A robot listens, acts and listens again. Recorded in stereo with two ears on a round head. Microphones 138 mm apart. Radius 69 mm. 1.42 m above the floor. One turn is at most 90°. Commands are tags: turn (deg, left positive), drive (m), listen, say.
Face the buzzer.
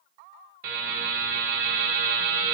<turn deg="-60"/>
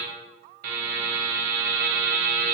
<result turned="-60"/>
<turn deg="-60"/>
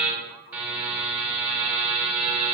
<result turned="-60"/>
<turn deg="-10"/>
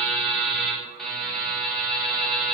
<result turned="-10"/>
<say>Found it: a buzzer, straight ahead.</say>